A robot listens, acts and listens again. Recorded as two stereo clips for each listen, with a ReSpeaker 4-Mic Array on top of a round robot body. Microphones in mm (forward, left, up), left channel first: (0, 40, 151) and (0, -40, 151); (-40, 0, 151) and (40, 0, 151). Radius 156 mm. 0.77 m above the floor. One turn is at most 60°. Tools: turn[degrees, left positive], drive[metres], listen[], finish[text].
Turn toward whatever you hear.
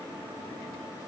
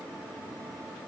Action: listen[]
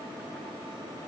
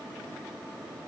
Action: listen[]
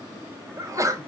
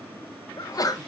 Thought: The sneeze: 140° right.
Action: turn[-60]
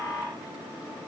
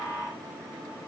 Thought: Nothing new. It was at 80° right.
Action: turn[-60]
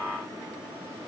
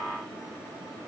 Thought: Nothing new. It was at 20° right.
Action: turn[-20]
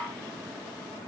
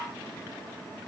Action: finish[I heard a sneeze from this way, but can't make it out now.]